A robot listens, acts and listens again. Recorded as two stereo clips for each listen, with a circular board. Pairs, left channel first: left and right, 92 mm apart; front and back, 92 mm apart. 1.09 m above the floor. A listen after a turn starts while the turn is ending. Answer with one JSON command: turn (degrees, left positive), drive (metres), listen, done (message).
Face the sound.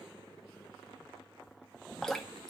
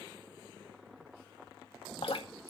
{"done": "Facing the dripping, 2 to 4 m away."}